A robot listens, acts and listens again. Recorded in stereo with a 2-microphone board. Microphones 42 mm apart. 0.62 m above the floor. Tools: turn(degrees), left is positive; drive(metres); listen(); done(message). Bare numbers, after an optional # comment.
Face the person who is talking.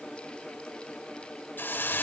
listen()
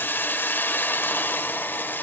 listen()
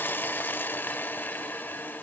done("I can't make out anyone speaking to turn to.")